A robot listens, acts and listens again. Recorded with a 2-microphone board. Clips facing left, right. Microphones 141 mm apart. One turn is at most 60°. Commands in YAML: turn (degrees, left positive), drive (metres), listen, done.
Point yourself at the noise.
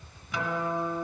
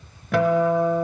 turn: -60
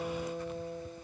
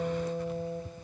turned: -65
turn: -25
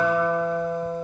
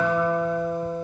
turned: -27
done: "Facing the guitar, under 1 m away."